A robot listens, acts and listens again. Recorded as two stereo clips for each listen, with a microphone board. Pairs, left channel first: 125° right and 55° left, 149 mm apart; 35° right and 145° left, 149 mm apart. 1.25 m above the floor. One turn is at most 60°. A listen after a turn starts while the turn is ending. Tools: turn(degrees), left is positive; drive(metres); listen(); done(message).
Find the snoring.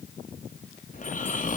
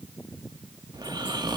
turn(degrees=-60)
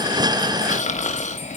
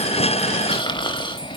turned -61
turn(degrees=-60)
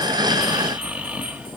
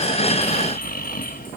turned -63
turn(degrees=-25)
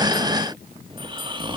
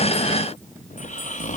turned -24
done("Found it: snoring, straight ahead, 1 to 2 m away.")